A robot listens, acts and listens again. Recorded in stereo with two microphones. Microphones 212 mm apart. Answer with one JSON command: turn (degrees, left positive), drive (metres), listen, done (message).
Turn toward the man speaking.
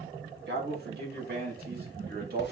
{"turn": -45}
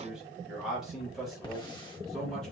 {"done": "Found it: a man speaking, straight ahead, 2 to 4 m away."}